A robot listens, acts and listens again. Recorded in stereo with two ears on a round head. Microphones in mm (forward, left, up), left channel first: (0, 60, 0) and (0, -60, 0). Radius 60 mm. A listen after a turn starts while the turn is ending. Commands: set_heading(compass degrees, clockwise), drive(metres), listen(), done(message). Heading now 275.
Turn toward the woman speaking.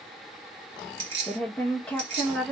set_heading(245)
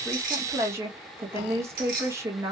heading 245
set_heading(265)
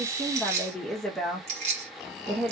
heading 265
done("Found it: a woman speaking, straight ahead.")